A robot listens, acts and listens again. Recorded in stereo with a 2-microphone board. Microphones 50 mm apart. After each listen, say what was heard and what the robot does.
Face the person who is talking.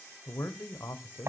The man speaking: about 70° left or 110° left. Turn 70° left.
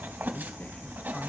Keep listening.
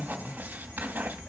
So it is at 25° left. Turn 25° left.
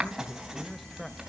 Facing the man speaking.